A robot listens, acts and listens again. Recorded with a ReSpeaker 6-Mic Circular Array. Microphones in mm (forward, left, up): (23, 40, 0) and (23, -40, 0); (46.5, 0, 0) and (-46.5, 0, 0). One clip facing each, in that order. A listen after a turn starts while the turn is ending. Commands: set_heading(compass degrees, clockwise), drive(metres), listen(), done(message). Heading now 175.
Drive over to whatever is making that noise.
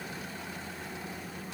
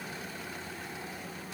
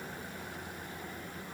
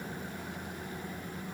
listen()
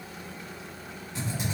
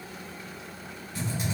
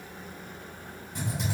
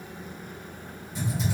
set_heading(155)
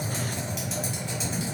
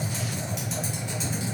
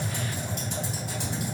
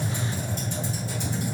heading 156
drive(1.0)
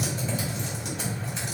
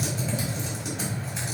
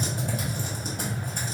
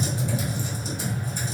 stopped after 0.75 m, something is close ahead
done("I am next to the typing on a keyboard.")